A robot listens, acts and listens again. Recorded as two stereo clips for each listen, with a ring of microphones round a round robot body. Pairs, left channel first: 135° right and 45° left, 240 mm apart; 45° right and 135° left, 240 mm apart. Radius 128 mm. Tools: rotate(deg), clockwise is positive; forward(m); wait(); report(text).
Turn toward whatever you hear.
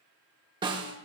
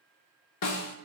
rotate(30)
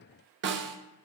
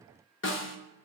report("Found it: a snare drum, straight ahead.")